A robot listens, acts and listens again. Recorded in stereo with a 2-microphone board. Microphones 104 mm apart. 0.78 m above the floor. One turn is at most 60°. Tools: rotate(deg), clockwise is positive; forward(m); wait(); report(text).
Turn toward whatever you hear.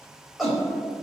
rotate(-30)
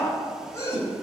rotate(-60)
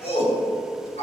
rotate(-60)
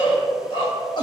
rotate(-45)
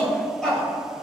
report("Facing the shout, over 4 m away.")